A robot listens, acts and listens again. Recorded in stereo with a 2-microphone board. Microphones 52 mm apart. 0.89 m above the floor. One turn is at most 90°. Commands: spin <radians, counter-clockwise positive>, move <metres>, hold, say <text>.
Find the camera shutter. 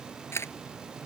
spin 0.96
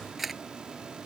say Found it: a camera shutter, straight ahead.